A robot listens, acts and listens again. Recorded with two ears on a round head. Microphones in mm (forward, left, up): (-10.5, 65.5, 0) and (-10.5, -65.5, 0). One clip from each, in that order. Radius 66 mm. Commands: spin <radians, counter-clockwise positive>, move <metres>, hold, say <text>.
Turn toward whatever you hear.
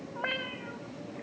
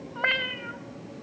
spin -1.05
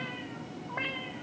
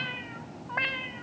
spin -0.70
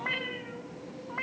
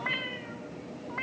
say Facing the cat meowing, 2 to 4 m away.